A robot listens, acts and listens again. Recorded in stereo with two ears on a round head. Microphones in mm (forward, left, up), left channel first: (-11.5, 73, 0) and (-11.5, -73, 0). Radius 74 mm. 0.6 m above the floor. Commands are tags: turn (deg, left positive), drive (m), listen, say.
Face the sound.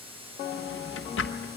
<turn deg="90"/>
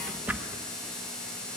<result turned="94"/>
<turn deg="-10"/>
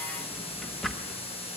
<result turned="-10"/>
<say>Facing the drawer, 1 to 2 m away.</say>